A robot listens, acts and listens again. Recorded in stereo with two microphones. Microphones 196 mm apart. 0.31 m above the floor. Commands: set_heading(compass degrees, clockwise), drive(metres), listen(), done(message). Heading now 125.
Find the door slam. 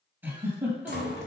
set_heading(60)
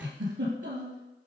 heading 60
listen()
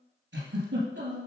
done("I heard a door slam, but can't make it out now. It was about straight ahead or 50° left.")